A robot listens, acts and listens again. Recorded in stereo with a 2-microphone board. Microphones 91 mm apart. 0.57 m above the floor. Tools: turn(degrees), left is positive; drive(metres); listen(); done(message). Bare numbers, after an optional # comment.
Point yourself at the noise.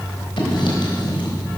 # The writing: about 65° left or 115° left.
turn(65)
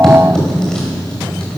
# So it is at 10° left.
turn(10)
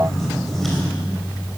done("Found it: writing, straight ahead, 2 to 4 m away.")